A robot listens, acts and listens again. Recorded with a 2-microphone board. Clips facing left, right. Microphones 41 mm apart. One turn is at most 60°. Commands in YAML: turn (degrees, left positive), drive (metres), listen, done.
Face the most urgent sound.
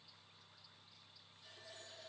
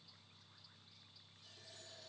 listen: true
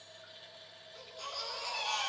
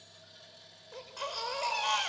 turn: -60
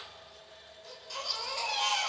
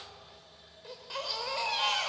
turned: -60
turn: -20
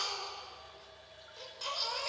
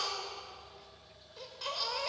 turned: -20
done: "Facing the baby crying, over 4 m away."